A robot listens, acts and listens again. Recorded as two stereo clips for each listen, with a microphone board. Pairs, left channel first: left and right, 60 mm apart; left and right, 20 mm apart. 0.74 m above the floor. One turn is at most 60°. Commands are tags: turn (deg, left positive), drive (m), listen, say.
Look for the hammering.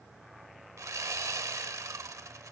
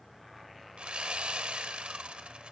<listen/>
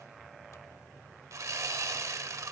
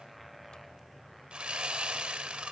<listen/>
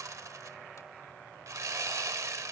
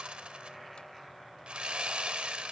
<say>I can't make out hammering to turn to.</say>